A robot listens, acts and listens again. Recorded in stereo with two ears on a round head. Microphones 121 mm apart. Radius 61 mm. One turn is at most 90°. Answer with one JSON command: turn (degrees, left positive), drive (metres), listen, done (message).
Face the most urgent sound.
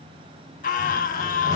{"turn": 60}
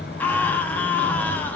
{"turn": 15}
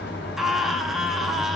{"done": "Facing the scream."}